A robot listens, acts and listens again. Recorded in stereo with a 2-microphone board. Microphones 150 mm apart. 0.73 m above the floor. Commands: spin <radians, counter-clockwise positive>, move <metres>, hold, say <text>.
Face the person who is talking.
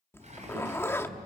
spin -1.57
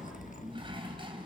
say Facing the child speaking, over 4 m away.